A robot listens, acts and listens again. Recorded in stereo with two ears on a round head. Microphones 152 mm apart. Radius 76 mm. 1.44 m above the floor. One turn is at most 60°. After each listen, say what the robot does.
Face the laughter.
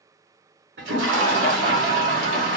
Turn 50° right.
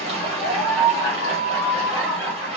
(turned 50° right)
Facing the laughter.